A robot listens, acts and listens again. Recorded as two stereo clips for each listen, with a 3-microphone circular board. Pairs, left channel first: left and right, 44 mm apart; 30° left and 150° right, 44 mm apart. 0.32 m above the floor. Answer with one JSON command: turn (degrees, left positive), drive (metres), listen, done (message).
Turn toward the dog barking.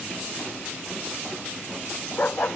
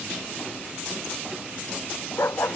{"turn": 40}
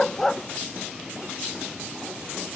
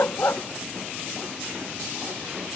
{"turn": 10}
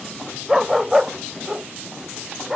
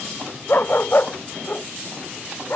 {"turn": -10}
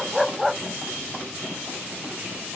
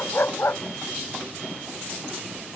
{"done": "Facing the dog barking."}